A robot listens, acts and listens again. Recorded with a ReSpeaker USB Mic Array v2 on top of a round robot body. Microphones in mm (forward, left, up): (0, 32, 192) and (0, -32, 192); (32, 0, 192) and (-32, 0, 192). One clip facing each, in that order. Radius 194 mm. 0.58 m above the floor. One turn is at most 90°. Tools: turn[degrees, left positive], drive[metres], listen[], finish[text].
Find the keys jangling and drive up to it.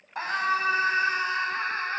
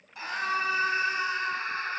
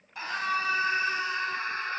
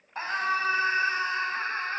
Action: listen[]
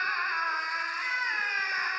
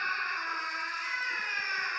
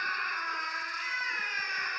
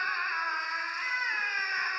Action: listen[]
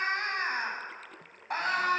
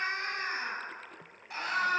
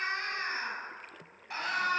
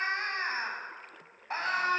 Action: finish[I can't make out keys jangling, only a scream.]